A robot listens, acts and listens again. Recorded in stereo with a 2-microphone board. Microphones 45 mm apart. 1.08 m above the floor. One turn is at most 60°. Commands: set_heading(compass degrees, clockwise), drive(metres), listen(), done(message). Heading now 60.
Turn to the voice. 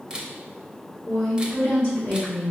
set_heading(5)
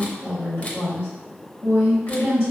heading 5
set_heading(305)
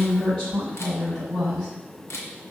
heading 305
set_heading(290)
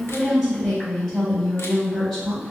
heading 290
done("Found it: a woman speaking, straight ahead.")